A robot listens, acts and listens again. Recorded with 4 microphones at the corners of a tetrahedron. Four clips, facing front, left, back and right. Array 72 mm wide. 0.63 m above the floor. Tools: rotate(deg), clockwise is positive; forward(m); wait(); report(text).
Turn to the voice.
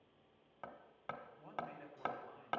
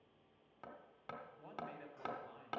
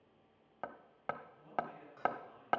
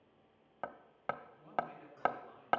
rotate(-60)
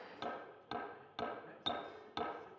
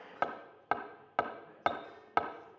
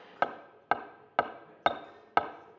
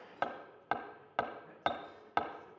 report("Found it: a man speaking, straight ahead.")